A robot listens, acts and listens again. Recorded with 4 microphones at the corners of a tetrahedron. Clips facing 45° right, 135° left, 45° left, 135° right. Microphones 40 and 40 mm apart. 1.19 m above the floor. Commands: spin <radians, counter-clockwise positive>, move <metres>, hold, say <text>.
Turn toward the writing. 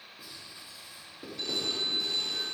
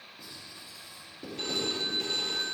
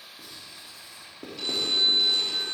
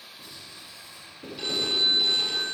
spin 0.61
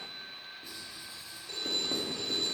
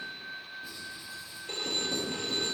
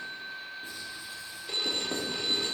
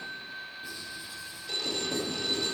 say Found it: writing, straight ahead.